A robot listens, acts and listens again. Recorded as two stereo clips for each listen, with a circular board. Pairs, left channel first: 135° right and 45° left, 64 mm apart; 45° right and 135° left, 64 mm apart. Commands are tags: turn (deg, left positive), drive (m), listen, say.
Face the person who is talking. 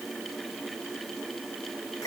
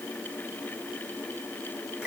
<listen/>
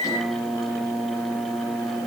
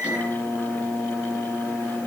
<listen/>
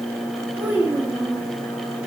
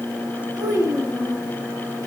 <turn deg="115"/>
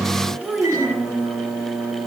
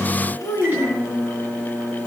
<turn deg="-20"/>
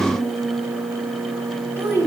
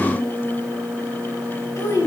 <say>Found it: a child speaking, straight ahead, 2 to 4 m away.</say>